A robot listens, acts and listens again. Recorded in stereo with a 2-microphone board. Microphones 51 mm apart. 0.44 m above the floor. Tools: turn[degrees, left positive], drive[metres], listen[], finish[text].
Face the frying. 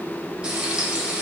Thought: The frying: about 20° right or 160° right.
Action: turn[-20]
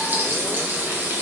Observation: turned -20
Thought: So it is at 140° right.
Action: turn[-140]
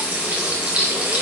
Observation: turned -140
Thought: The frying is now 35° right.
Action: turn[-35]
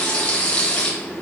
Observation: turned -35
Thought: The frying is now 25° left.
Action: turn[25]
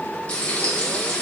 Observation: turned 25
Thought: The frying is now 25° left.
Action: turn[25]
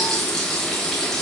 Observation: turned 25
Action: finish[Found it: frying, straight ahead, 1 to 2 m away.]